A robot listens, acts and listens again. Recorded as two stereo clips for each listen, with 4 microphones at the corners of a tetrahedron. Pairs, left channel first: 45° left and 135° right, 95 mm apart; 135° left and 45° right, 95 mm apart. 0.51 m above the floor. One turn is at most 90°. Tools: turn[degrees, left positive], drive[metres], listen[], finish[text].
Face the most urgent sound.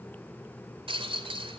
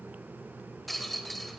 Action: listen[]
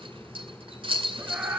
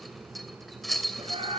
Thought: The scream: 65° right.
Action: turn[-65]
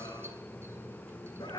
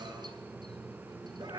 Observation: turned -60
Action: finish[Found it: a scream, straight ahead.]